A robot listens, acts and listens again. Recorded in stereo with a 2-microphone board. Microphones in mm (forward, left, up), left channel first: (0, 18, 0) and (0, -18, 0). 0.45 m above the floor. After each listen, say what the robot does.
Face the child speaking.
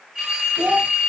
Turn 55° right.
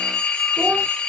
Keep listening.
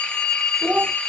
Turn 55° right.
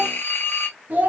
Turn 45° right.
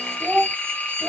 Turn 15° right.
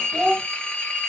Facing the child speaking.